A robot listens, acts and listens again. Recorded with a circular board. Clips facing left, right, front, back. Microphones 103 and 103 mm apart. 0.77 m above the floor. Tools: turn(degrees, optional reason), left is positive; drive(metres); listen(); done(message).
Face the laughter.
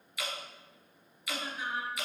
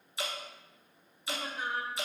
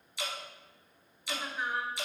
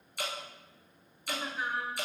turn(degrees=-95, reason="The laughter: 95° right.")
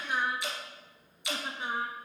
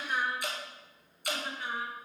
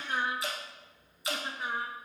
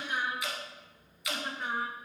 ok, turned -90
turn(degrees=100, reason="The laughter is now 100° left.")
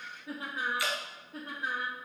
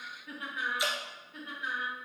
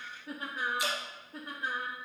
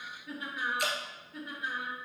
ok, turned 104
turn(degrees=45, reason="The laughter is now 45° left.")
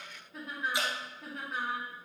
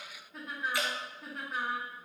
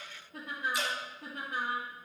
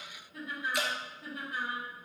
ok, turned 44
done("Found it: laughter, straight ahead.")